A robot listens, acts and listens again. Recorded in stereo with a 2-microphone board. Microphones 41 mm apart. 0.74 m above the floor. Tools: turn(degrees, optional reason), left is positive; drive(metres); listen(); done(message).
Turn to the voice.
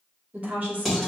turn(degrees=-45, reason="The woman speaking: about 45° right or 135° right.")
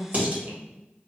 turn(degrees=-90, reason="So it is at 90° right.")
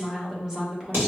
turn(degrees=-15, reason="The woman speaking is now 15° right.")
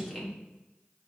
done("Facing the woman speaking, 1 to 2 m away.")